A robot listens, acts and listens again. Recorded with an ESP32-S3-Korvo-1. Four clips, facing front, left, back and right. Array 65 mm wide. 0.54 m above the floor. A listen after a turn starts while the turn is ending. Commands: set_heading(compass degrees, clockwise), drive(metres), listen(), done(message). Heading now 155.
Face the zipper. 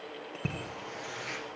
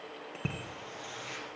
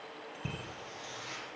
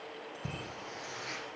set_heading(175)
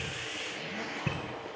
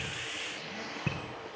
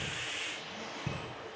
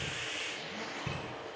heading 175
done("Found it: a zipper, straight ahead, 2 to 4 m away.")